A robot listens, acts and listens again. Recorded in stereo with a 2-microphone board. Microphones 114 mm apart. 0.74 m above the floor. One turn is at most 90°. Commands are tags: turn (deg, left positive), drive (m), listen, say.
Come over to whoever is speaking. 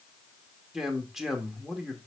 <turn deg="-30"/>
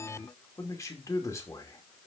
<turn deg="30"/>
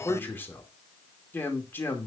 <turn deg="20"/>
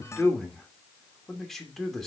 <drive m="1.0"/>
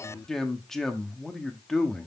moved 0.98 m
<drive m="1.0"/>
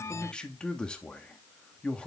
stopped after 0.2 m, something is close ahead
<turn deg="10"/>
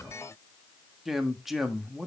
<say>Arrived at the man speaking, straight ahead.</say>